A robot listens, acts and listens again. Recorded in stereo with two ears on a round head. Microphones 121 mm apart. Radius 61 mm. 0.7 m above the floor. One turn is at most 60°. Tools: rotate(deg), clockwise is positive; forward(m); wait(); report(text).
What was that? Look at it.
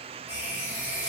rotate(30)
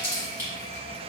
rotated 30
rotate(-15)
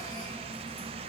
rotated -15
report("Found it: a running tap, straight ahead.")